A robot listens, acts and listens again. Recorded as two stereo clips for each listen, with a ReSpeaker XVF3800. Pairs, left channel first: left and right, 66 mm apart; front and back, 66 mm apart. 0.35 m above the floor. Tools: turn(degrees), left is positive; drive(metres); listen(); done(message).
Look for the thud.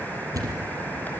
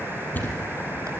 turn(degrees=-60)
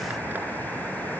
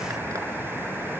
done("I heard a thud from this way, but can't make it out now.")